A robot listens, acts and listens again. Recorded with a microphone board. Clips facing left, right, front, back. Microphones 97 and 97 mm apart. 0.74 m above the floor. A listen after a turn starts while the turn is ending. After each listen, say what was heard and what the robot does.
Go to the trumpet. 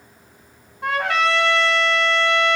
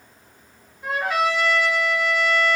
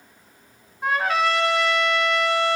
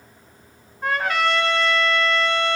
The trumpet: 85° left. Turn 85° left.
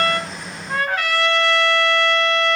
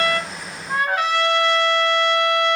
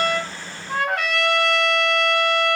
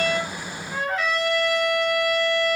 The trumpet is now 10° right. Turn 10° right.
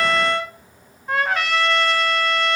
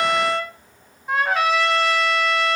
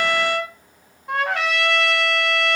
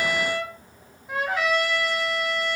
Drive 1.0 m forward.
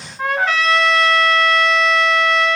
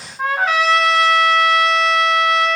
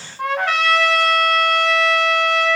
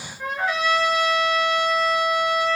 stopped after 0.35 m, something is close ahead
Something is in my way. I am facing the trumpet but have not reached it.